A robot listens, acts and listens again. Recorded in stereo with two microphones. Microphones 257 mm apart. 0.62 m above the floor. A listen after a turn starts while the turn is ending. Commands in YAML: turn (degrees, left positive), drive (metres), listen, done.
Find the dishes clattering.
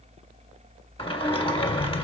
listen: true
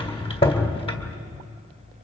listen: true
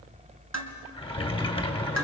turn: -70
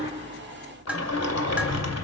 done: "Facing the dishes clattering, 2 to 4 m away."